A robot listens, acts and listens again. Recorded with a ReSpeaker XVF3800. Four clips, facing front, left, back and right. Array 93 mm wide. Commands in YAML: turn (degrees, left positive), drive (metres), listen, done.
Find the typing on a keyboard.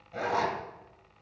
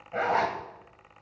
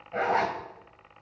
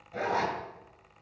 listen: true
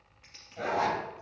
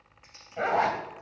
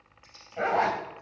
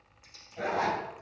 turn: 40
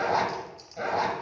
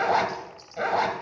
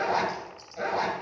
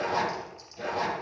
done: "Found it: typing on a keyboard, straight ahead."